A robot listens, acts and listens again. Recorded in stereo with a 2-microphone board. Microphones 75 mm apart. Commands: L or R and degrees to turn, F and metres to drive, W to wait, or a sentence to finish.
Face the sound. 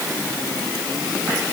W
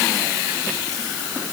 W
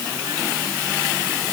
I can't make out anything.